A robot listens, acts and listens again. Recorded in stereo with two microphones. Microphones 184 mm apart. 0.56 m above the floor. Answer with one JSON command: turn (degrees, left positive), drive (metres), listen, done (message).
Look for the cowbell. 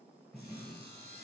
{"listen": true}
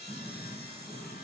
{"listen": true}
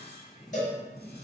{"turn": 45}
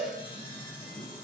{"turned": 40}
{"turn": 95}
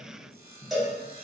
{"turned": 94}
{"done": "Facing the cowbell, 1 to 2 m away."}